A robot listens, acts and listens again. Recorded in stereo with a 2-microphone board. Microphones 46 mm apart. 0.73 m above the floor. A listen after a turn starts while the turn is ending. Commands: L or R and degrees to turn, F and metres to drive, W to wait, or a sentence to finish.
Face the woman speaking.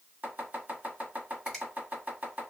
W
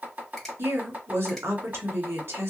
R65
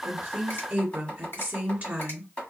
R35
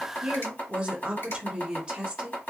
R20
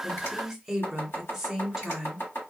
Found it: a woman speaking, straight ahead.